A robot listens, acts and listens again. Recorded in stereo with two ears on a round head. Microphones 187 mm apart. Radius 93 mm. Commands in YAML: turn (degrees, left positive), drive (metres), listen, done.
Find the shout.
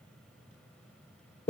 listen: true
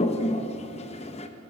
listen: true
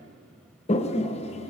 done: "I can't make out a shout to turn to."